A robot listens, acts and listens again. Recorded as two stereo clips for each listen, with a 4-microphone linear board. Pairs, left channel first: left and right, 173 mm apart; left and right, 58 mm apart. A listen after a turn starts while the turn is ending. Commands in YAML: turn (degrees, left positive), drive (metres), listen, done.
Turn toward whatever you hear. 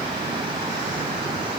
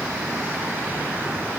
listen: true
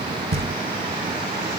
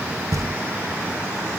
turn: -70
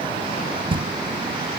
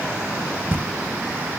turn: -30
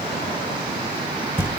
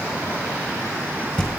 turn: 15
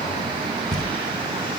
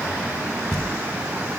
done: "Facing the knocking, 1 to 2 m away."